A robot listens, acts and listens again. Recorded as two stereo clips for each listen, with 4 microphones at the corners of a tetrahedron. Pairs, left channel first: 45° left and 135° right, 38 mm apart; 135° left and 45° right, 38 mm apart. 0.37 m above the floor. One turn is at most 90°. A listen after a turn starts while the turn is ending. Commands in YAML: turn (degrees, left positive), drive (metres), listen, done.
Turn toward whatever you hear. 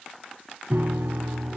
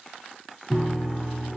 turn: -90
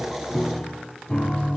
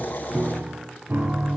turn: -20
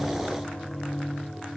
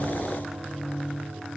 done: "Found it: a piano, straight ahead, 1 to 2 m away."